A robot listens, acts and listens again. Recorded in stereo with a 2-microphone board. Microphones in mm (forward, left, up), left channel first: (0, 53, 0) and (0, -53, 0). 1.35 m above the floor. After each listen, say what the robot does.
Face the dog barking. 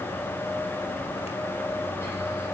Keep listening.
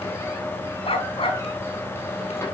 Turn 60° left.
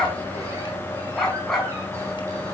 Facing the dog barking.